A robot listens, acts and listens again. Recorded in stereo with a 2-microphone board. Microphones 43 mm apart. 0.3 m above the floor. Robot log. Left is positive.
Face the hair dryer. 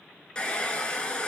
note: The hair dryer: about 20° left or 160° left.
cmd yaw +20
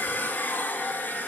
note: So it is at 140° left.
cmd yaw +140
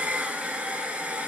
note: The hair dryer is now 30° right.
cmd yaw -30
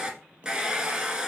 note: The hair dryer is now 20° right.
cmd yaw -20
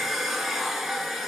end: Found it: a hair dryer, straight ahead.